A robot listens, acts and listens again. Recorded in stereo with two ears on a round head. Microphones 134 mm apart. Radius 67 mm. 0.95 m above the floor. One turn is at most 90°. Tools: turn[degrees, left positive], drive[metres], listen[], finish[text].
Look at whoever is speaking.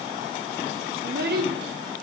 Thought: The child speaking: about 70° right or 110° right.
Action: turn[-70]
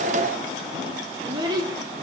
Thought: So it is at 30° right.
Action: turn[-30]
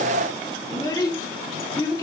Thought: The child speaking is now 25° left.
Action: turn[25]
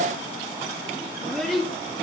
Action: finish[Found it: a child speaking, straight ahead, 1 to 2 m away.]